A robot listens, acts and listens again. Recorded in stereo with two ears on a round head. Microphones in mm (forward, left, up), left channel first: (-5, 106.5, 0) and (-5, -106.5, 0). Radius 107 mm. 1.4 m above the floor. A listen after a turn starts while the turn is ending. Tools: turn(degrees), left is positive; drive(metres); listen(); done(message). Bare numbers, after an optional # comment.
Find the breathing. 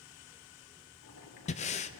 # The breathing: about 30° left or 150° left.
turn(30)
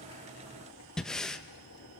done("Found it: breathing, straight ahead, under 1 m away.")